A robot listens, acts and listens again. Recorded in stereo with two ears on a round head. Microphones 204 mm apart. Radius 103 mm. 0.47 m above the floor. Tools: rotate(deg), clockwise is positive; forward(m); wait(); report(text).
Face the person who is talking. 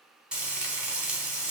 wait()
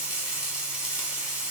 wait()
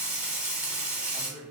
rotate(-30)
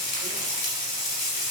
wait()
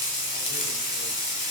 wait()
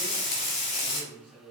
rotate(25)
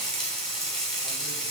wait()
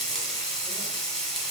wait()
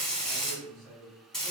report("Facing the man speaking, 1 to 2 m away.")